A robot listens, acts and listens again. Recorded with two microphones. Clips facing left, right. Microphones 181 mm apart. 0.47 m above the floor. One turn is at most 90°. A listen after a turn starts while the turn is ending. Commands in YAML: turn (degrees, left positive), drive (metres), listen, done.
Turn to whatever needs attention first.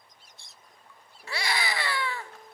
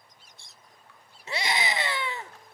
turn: -20
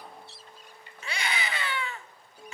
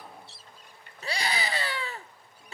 turn: -90
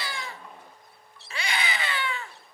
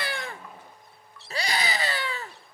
turn: -45
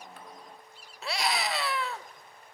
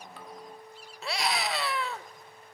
done: "Found it: a scream, straight ahead."